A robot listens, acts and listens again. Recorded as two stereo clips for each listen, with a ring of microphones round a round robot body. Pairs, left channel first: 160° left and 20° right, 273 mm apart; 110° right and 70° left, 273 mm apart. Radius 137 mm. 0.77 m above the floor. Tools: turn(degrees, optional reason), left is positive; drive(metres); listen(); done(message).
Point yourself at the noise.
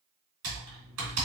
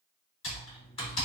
turn(degrees=-45, reason="The typing on a keyboard: 45° right.")
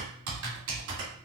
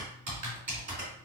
turn(degrees=10, reason="The typing on a keyboard is now 10° left.")
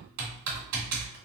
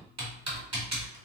done("Found it: typing on a keyboard, straight ahead, 2 to 4 m away.")